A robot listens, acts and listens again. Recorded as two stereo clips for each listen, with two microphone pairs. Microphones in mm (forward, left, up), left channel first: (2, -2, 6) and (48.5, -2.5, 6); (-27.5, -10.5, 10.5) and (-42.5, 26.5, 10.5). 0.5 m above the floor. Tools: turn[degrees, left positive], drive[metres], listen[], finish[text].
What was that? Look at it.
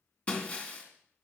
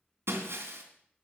Thought: The breaking glass: 115° left.
Action: turn[115]
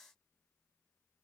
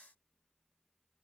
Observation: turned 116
Action: finish[I heard breaking glass from this way, but can't make it out now.]